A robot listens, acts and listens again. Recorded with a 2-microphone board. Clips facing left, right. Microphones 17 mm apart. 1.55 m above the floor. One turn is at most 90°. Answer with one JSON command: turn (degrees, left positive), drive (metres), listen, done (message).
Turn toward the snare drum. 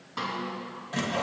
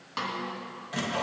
{"turn": -60}
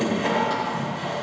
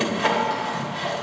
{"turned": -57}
{"listen": true}
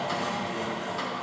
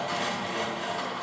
{"listen": true}
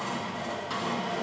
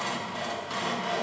{"done": "I heard a snare drum, but can't make it out now. It was about straight ahead or 65° right."}